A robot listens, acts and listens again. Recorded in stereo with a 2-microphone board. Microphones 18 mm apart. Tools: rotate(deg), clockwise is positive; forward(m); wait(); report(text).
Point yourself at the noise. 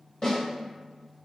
rotate(-40)
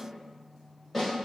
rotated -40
report("Found it: a snare drum, straight ahead.")